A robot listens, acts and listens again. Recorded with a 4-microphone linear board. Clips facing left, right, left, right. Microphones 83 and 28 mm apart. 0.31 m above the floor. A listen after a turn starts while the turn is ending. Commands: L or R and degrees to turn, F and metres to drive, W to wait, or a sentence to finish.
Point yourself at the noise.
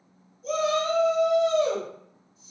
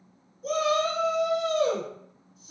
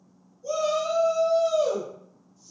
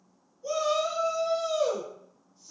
R55
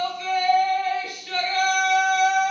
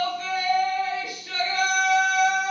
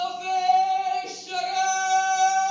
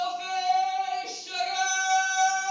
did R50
R20
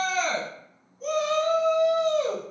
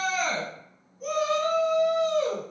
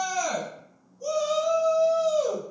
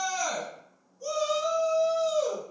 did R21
Facing the shout.